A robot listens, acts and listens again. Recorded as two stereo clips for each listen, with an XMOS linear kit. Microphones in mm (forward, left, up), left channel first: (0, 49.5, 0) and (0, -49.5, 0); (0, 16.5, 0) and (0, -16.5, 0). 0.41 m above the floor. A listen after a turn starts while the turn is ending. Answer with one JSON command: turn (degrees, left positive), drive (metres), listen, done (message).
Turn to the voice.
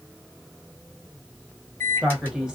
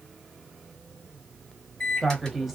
{"turn": -30}
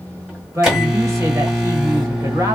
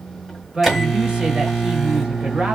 {"turn": -140}
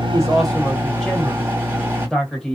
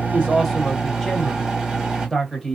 {"turn": 10}
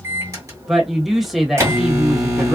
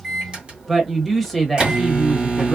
{"done": "Found it: a man speaking, straight ahead, 1 to 2 m away."}